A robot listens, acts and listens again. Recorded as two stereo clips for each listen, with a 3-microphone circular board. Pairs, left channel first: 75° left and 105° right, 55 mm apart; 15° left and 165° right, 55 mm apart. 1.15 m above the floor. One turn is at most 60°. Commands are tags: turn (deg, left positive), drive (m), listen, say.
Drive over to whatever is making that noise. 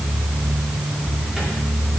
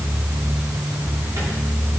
<listen/>
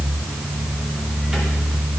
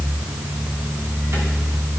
<listen/>
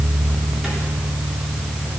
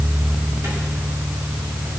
<say>I can't make out anything to turn to.</say>